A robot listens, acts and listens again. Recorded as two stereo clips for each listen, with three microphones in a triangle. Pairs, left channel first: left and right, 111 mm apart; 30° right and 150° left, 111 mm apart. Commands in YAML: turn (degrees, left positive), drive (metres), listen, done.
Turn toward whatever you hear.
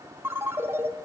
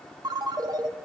turn: -155
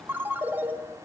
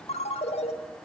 turn: -15
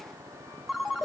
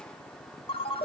done: "Found it: a ringtone, straight ahead, 1 to 2 m away."